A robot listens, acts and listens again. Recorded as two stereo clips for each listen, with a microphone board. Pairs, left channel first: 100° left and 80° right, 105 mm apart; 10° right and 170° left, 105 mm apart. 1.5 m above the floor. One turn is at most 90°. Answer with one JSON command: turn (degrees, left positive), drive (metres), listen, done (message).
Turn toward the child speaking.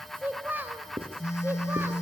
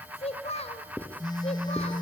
{"done": "Found it: a child speaking, straight ahead."}